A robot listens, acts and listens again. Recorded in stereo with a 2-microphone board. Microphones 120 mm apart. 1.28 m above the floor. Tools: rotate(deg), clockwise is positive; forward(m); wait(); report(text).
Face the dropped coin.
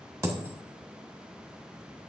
rotate(25)
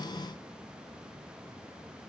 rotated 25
wait()
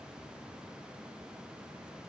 report("I heard a dropped coin, but can't make it out now. It was about straight ahead or 130° right.")